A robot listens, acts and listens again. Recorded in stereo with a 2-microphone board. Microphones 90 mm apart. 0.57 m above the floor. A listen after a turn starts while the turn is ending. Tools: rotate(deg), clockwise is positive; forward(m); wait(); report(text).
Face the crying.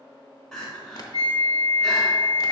rotate(-30)
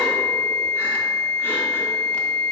wait()
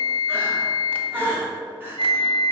rotate(20)
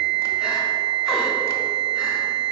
wait()
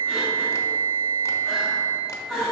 report("Facing the crying, 1 to 2 m away.")